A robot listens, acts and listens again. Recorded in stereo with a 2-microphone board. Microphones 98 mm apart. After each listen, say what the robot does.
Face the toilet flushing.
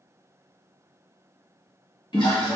Turn 55° left.
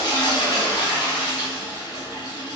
Turn 55° left.
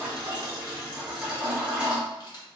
Turn 15° right.
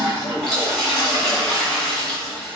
Facing the toilet flushing, 1 to 2 m away.